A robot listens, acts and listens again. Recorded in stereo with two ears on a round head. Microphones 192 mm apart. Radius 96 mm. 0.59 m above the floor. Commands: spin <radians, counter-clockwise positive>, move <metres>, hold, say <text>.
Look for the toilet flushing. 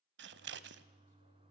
spin -0.44
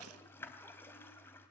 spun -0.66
spin 0.17
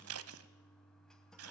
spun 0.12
say Facing the toilet flushing.